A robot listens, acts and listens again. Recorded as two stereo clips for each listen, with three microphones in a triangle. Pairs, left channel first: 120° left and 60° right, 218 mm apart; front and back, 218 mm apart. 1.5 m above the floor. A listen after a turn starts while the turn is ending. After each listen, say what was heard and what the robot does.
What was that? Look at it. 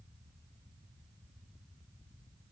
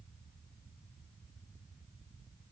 Keep listening.
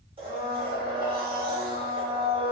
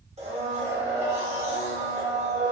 The blender: 120° right. Turn 120° right.
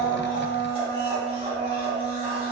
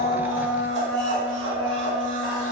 Facing the blender.